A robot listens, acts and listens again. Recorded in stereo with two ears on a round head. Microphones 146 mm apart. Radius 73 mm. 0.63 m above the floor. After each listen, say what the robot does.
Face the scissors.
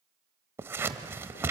Turn 30° right.
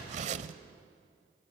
Turn 135° right.
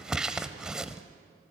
Found it: scissors, straight ahead.